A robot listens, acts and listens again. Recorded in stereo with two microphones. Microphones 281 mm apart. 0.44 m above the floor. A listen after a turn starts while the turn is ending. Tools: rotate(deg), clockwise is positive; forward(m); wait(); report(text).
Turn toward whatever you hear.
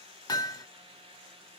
rotate(-30)
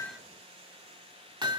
rotate(15)
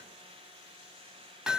report("Found it: hammering, straight ahead, under 1 m away.")